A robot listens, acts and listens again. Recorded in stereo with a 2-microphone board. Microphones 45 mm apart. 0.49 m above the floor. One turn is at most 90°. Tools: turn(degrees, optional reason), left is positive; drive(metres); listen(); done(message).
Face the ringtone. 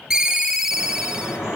turn(degrees=-30)
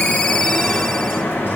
turn(degrees=20, reason="So it is at 20° left.")
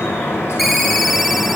done("Facing the ringtone.")